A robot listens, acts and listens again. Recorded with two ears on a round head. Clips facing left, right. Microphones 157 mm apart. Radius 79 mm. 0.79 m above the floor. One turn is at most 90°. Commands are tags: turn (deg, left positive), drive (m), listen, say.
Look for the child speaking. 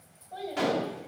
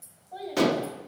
<turn deg="30"/>
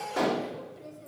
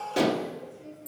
<turn deg="90"/>
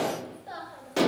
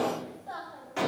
<turn deg="20"/>
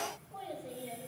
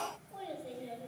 <turn deg="-10"/>
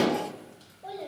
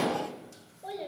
<turn deg="-15"/>
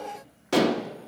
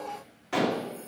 <listen/>
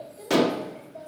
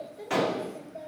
<turn deg="-10"/>
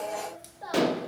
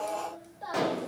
<say>Facing the child speaking, 2 to 4 m away.</say>